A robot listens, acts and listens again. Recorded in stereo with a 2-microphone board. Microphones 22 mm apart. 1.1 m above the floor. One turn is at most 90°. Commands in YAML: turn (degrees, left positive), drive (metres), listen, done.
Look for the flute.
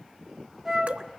turn: -15
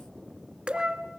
turn: -90
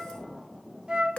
turn: -40
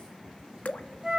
turn: -20
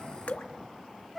done: "Found it: a flute, straight ahead."